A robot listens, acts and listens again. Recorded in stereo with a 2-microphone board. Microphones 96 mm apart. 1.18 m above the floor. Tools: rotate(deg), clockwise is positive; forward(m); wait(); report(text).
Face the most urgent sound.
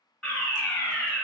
rotate(-30)
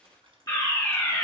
rotate(-145)
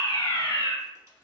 rotate(-60)
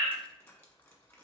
report("Facing the fire alarm, 1 to 2 m away.")